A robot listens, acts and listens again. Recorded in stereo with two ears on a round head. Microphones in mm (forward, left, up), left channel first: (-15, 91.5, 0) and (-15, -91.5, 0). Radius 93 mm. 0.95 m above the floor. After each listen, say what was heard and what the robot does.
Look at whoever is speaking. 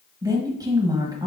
The woman speaking: about 15° right or 165° right. Turn 15° right.
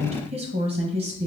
So it is at 150° right. Turn 150° right.
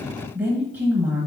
The woman speaking is now 10° right. Turn 10° right.
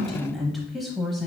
Facing the woman speaking.